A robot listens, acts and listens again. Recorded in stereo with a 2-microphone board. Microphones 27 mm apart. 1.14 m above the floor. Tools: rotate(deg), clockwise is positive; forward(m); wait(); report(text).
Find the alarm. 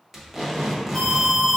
rotate(25)
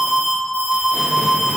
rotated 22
report("Found it: an alarm, straight ahead.")